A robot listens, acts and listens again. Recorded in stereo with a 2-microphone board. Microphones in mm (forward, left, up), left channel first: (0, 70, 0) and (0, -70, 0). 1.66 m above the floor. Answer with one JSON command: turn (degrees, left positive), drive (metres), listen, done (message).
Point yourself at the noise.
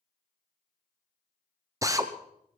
{"turn": -25}
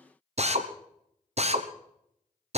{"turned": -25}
{"turn": -130}
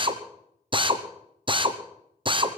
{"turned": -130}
{"turn": -35}
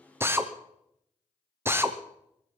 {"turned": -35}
{"turn": -15}
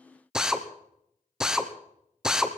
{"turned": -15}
{"done": "Found it: a drill, straight ahead."}